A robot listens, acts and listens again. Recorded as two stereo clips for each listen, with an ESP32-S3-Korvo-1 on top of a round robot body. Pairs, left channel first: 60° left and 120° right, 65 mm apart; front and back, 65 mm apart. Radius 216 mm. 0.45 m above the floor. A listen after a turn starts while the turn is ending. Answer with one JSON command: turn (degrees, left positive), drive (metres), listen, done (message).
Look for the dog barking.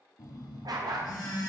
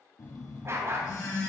{"turn": -130}
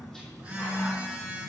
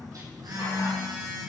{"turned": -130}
{"listen": true}
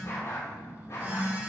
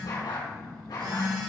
{"turn": 10}
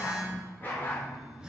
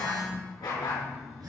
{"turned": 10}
{"done": "Facing the dog barking, over 4 m away."}